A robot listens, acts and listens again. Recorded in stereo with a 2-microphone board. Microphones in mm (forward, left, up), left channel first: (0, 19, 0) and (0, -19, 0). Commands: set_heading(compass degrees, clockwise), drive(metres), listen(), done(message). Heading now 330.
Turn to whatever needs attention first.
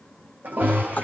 set_heading(30)
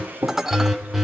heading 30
done("Found it: an alarm, straight ahead, over 4 m away.")